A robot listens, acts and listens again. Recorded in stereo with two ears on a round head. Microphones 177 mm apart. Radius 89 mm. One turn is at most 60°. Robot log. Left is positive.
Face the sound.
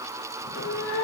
note: The cat meowing: about 70° left or 110° left.
cmd yaw +60
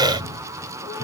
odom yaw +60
note: So it is at 20° left.
cmd yaw +20
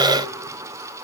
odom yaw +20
cmd idle
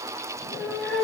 end: Found it: a cat meowing, straight ahead.